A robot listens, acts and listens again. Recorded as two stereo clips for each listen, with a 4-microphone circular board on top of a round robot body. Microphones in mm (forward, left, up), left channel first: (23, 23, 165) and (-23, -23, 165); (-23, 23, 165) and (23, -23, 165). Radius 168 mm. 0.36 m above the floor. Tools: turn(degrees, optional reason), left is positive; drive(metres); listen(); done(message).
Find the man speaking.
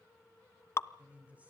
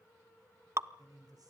turn(degrees=-65, reason="The man speaking: 65° right.")
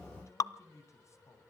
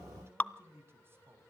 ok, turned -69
turn(degrees=10, reason="The man speaking is now 10° left.")
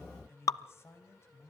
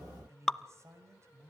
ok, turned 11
done("Found it: a man speaking, straight ahead.")